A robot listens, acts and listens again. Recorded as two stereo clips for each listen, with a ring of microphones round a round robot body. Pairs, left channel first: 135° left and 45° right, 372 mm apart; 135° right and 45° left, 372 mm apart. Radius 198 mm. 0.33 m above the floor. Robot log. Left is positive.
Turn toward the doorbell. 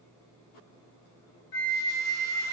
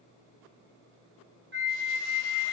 cmd idle
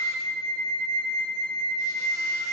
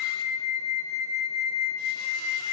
cmd idle
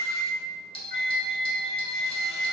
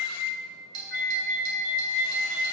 note: The doorbell: 60° left.
cmd yaw +60
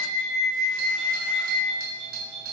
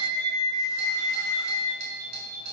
end: Found it: a doorbell, straight ahead.